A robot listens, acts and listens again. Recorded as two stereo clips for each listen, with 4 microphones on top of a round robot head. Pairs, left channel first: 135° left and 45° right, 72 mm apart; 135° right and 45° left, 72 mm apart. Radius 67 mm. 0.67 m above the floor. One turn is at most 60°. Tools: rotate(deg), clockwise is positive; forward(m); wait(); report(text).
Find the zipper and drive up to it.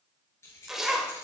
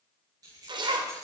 rotate(-40)
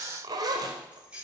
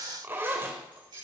rotate(15)
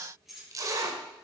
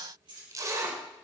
forward(1.0)
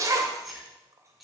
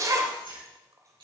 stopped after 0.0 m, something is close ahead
report("Blocked. The zipper is further on, straight ahead.")